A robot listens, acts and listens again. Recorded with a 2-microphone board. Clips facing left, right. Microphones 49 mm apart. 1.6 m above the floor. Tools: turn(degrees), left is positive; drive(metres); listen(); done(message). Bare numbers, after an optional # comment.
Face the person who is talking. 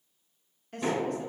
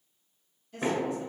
# The woman speaking: about 60° left or 120° left.
turn(60)
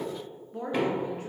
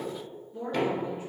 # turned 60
# So it is at 60° left.
turn(60)
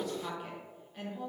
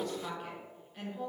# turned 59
done("Facing the woman speaking, under 1 m away.")